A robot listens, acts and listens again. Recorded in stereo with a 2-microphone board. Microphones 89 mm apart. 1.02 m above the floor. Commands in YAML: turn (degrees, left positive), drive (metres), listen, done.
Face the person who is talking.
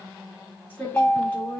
turn: 20
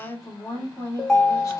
turn: 140
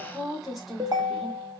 done: "Found it: a woman speaking, straight ahead."